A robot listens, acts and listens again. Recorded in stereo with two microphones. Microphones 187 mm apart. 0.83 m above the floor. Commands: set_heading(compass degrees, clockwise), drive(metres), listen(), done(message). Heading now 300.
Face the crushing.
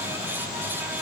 listen()
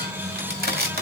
set_heading(5)
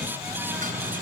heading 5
listen()
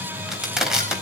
done("Found it: crushing, straight ahead.")